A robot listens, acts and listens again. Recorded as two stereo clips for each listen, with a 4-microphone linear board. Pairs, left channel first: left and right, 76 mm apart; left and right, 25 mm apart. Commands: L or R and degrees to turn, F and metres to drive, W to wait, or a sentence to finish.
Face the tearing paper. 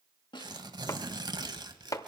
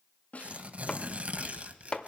R65
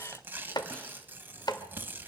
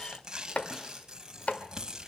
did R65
R30
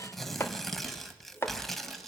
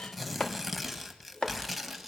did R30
Found it: tearing paper, straight ahead, 1 to 2 m away.